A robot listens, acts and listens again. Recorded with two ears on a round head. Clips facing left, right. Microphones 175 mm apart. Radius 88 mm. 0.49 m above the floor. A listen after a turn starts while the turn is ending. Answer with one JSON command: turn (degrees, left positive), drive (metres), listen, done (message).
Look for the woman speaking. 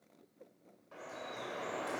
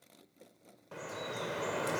{"listen": true}
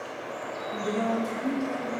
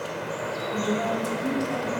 {"turn": -30}
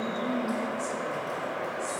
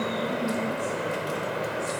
{"turn": 15}
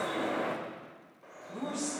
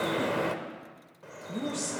{"turn": -25}
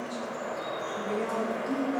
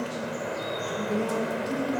{"done": "Facing the woman speaking."}